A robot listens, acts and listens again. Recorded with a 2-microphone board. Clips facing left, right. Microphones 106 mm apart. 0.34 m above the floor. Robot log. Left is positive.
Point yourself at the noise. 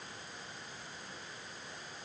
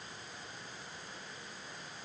cmd idle
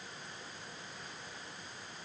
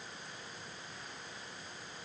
cmd idle
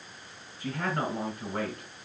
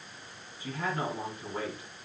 note: The man speaking: about 60° left or 120° left.
cmd yaw +60
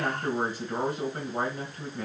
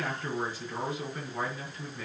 note: So it is at 60° left.
cmd yaw +60
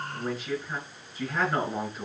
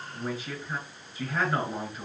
end: Found it: a man speaking, straight ahead.